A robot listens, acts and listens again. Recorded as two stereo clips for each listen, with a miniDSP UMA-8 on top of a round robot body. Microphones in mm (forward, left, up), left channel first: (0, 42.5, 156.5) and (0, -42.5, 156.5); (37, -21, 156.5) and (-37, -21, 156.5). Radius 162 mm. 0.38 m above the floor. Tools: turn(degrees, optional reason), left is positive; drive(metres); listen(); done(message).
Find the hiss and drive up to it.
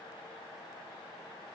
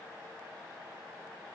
listen()
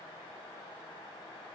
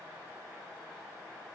listen()
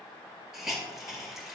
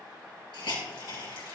drive(metres=1.0)
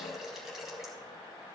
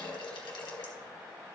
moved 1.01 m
drive(metres=1.0)
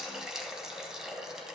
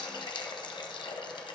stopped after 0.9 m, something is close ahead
done("Arrived at the hiss, straight ahead.")